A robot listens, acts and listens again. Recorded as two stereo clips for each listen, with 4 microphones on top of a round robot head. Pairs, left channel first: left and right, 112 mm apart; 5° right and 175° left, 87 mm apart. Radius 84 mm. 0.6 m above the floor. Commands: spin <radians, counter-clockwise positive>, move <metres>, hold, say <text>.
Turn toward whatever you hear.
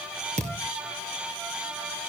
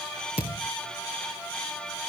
spin -0.79
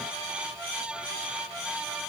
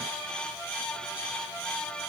say Facing where the thud came from. I can't hear it now.